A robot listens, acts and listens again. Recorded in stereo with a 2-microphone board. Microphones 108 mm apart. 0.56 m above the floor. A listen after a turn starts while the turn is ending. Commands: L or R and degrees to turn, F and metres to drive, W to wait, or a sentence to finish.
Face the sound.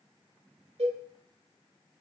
R70
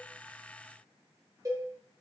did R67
R30
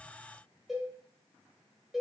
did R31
Facing the cowbell.